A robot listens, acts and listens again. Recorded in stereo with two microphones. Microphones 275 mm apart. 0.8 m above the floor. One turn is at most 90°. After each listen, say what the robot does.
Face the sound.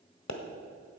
Turn 90° left.
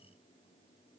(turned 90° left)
Facing where the pop came from. I can't hear it now.